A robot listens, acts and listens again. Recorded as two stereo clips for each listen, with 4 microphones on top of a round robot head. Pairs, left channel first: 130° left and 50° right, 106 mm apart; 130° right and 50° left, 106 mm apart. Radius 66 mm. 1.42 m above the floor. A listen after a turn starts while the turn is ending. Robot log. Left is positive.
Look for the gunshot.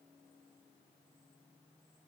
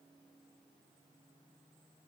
cmd idle
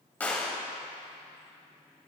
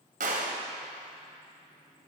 note: The gunshot: 60° left.
cmd yaw +60
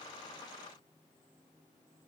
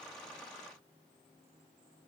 end: Facing where the gunshot came from. I can't hear it now.